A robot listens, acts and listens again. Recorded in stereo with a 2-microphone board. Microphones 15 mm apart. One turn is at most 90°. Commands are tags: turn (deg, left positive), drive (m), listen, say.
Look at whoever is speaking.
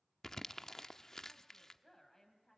<turn deg="20"/>
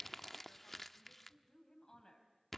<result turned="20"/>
<turn deg="90"/>
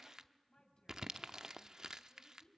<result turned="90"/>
<turn deg="75"/>
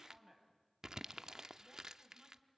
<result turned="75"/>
<say>Facing the woman speaking.</say>